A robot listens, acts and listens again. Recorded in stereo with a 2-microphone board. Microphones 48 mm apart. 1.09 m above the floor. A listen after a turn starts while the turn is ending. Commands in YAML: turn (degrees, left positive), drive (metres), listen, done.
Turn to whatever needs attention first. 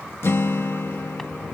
listen: true
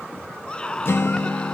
turn: 20
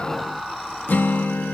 done: "Found it: a scream, straight ahead."